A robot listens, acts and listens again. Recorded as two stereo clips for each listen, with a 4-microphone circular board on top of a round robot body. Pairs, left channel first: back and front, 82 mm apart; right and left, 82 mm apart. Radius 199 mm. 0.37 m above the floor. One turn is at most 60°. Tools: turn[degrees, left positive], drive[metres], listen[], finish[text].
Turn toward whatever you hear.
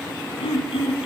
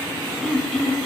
Thought: The throat clearing: 175° right.
Action: turn[-60]
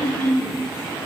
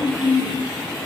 Thought: The throat clearing is now 115° right.
Action: turn[-60]
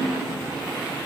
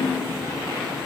Thought: The throat clearing is now 60° right.
Action: turn[-60]
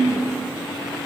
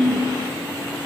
Action: finish[Facing the throat clearing, 2 to 4 m away.]